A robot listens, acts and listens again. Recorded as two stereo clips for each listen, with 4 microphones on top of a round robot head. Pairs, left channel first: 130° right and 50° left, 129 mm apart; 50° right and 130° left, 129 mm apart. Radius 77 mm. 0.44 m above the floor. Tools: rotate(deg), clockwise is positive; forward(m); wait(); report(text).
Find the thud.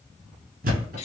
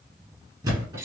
rotate(-70)
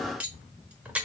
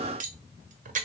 report("I heard a thud from this way, but can't make it out now.")